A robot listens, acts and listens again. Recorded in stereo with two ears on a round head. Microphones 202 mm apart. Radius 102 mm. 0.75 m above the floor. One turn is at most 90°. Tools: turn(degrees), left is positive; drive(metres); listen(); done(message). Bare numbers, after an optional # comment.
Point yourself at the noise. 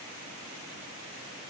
listen()
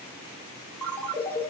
turn(30)
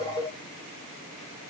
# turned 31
# So it is at 25° right.
turn(-25)
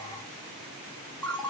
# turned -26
done("Facing the ringtone.")